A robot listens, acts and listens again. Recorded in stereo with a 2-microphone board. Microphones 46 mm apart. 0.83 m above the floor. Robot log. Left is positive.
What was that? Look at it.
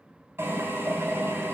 note: The drill: about 70° right or 110° right.
cmd yaw -70
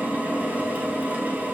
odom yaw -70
note: So it is at 35° right.
cmd yaw -35
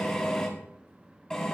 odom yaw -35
note: The drill is now 15° left.
cmd yaw +15
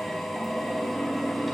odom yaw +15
end: Facing the drill.